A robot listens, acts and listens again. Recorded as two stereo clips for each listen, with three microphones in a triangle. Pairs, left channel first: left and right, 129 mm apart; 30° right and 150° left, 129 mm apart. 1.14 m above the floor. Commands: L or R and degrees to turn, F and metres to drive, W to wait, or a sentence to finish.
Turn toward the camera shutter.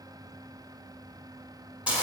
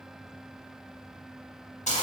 W
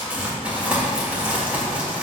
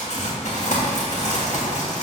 W
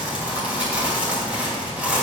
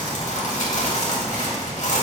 I can't make out a camera shutter, only crumpling.